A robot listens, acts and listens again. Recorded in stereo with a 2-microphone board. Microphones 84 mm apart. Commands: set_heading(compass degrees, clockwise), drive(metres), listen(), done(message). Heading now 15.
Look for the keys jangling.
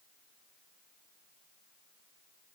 listen()
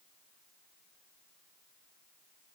listen()
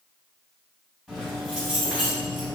set_heading(45)
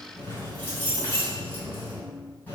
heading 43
set_heading(23)
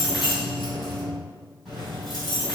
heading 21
done("Found it: keys jangling, straight ahead.")